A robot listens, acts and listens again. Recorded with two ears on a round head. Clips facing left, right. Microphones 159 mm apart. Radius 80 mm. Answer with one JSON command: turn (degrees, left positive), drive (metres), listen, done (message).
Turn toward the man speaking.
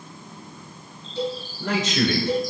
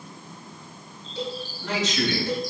{"turn": 45}
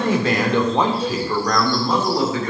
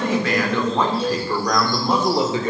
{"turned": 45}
{"turn": -25}
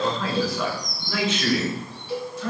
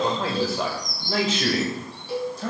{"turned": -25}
{"turn": -35}
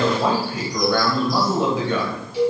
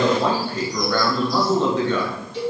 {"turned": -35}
{"turn": 10}
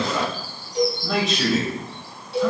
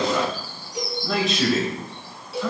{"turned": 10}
{"done": "Facing the man speaking, 2 to 4 m away."}